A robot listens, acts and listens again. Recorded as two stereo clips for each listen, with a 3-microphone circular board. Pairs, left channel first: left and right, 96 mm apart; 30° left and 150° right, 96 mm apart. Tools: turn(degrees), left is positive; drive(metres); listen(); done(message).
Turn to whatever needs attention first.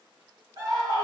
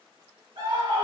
turn(degrees=-135)
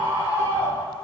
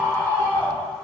turn(degrees=-35)
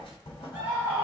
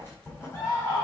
turn(degrees=-25)
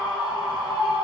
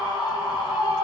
turn(degrees=-10)
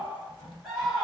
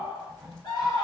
done("Found it: a scream, straight ahead.")